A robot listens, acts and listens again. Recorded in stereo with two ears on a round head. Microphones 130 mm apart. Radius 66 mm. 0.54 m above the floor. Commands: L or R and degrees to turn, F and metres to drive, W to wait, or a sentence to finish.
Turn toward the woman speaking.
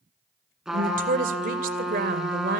R65
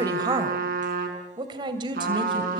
R30
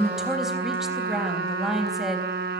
Found it: a woman speaking, straight ahead.